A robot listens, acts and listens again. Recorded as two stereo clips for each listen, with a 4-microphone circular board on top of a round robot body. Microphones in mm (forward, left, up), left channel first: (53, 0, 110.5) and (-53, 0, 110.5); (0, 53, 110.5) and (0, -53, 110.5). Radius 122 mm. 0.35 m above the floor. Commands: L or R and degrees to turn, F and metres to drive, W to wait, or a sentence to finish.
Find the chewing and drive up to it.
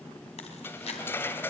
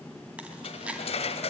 R10
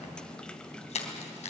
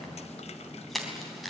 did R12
F1.0
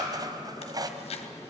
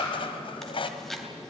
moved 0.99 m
F1.0
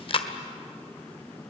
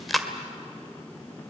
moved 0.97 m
F1.0
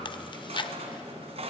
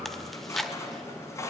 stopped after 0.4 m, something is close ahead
I am next to the chewing.